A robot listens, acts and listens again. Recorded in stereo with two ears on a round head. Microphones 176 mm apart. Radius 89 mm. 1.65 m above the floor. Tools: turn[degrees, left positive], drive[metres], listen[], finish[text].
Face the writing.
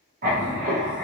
Thought: The writing: about 40° right or 140° right.
Action: turn[-40]
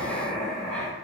Action: finish[Found it: writing, straight ahead.]